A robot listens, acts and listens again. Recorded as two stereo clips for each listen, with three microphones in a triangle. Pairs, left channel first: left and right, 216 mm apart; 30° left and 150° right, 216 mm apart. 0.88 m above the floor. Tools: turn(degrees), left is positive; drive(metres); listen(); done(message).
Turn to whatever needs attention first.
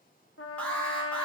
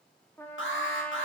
done("Found it: an alarm, straight ahead, 1 to 2 m away.")